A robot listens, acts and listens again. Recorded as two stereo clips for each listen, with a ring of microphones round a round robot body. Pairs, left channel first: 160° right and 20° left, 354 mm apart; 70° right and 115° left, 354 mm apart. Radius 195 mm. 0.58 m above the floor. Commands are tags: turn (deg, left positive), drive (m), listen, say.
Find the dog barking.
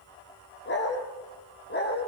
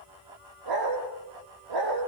<turn deg="140"/>
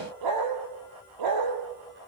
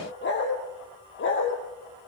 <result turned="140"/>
<turn deg="-10"/>
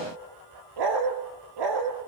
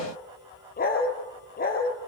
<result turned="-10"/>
<say>Facing the dog barking, over 4 m away.</say>